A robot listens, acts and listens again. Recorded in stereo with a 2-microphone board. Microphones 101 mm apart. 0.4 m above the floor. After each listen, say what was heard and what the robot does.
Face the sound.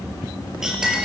Turn 30° right.
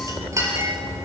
So it is at 145° right. Turn 145° right.
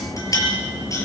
The clink is now 35° left. Turn 35° left.
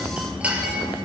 The clink is now 15° right. Turn 15° right.
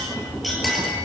Found it: a clink, straight ahead, over 4 m away.